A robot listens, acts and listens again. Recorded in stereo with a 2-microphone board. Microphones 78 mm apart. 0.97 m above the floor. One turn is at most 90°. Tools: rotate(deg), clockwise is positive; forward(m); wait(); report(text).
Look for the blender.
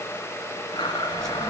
rotate(-70)
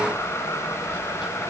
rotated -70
wait()
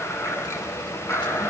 rotate(-35)
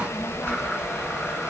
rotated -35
wait()
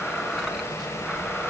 wait()
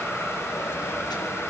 report("Facing where the blender came from. I can't hear it now.")